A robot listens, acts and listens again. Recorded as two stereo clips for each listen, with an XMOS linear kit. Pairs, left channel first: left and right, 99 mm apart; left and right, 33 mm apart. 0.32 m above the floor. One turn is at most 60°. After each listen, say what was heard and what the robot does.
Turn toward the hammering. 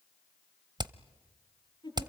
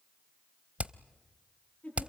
The hammering: about 45° right or 135° right. Turn 45° right.
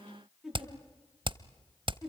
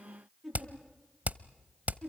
So it is at 75° right. Turn 60° right.
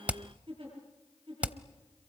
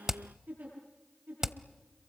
The hammering is now 15° right. Turn 15° right.
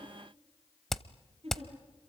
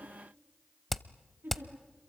Facing the hammering.